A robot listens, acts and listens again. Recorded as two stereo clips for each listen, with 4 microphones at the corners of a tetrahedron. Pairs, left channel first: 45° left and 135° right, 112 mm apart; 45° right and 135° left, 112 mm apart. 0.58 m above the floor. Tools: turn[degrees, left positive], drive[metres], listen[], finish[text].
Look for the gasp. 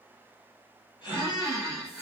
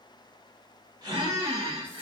Thought: The gasp: 90° left.
Action: turn[90]
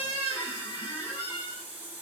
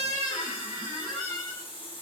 Action: finish[Facing where the gasp came from. I can't hear it now.]